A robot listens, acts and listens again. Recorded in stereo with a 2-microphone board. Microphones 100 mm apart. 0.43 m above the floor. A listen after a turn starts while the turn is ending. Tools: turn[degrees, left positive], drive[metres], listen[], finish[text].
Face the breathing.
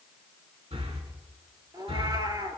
Thought: The breathing: about 75° right or 105° right.
Action: turn[-75]
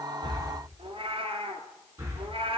Thought: So it is at 25° right.
Action: turn[-25]
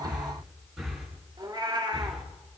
Action: finish[Facing the breathing.]